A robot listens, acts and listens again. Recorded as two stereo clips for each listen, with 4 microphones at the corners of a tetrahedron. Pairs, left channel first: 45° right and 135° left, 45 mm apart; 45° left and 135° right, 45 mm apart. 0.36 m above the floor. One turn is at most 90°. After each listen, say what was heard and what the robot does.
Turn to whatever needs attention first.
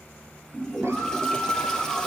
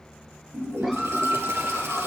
The scream: 150° left. Turn 90° left.
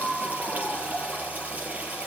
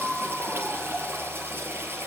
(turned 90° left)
The scream is now 100° left. Turn 90° left.
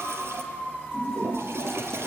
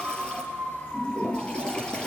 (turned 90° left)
The scream is now 20° left. Turn 20° left.
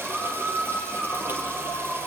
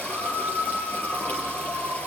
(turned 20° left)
The scream is now 10° left. Turn 10° left.
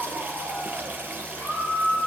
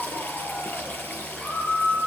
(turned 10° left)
Facing the scream.